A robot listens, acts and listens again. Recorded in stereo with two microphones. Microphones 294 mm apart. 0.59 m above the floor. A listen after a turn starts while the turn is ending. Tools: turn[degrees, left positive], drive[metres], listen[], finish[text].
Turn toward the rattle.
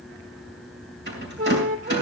Thought: The rattle: about 35° right or 145° right.
Action: turn[-35]
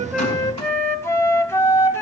Action: listen[]
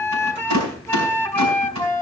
Thought: So it is at 105° right.
Action: turn[-105]
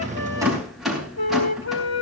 Action: finish[Found it: a rattle, straight ahead.]